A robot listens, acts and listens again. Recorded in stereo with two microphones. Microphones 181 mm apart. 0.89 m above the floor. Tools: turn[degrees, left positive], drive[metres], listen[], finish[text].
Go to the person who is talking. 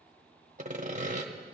Action: listen[]
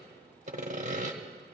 Action: listen[]
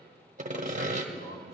Thought: The man speaking: about 70° left or 110° left.
Action: turn[70]
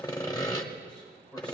Thought: So it is at 10° left.
Action: turn[10]
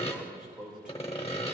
Action: drive[1.0]
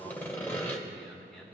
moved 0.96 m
Action: drive[1.0]
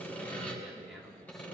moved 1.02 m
Action: drive[1.0]
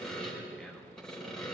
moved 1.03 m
Action: drive[1.0]
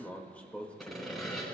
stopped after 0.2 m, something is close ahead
Thought: The man speaking is now 10° left.
Action: turn[10]
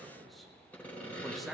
Action: finish[Arrived at the man speaking, straight ahead.]